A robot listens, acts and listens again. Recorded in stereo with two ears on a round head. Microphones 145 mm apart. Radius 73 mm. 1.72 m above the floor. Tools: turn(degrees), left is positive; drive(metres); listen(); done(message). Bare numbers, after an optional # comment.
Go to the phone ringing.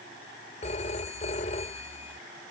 # The phone ringing: about 40° left or 140° left.
turn(40)
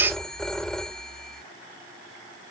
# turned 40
drive(1.0)
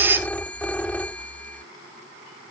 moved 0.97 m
# The phone ringing is now 10° left.
turn(10)
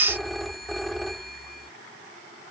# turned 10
drive(1.0)
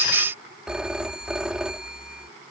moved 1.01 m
drive(1.0)
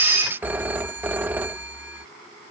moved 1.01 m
# The phone ringing is now 10° right.
turn(-10)
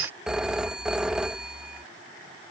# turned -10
drive(1.0)
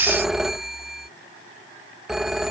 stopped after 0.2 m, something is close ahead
done("I am next to the phone ringing.")